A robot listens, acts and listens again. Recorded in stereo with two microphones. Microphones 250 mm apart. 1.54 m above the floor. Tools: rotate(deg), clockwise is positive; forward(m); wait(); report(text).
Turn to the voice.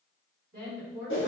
rotate(60)
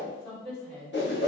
report("Found it: a woman speaking, straight ahead, 1 to 2 m away.")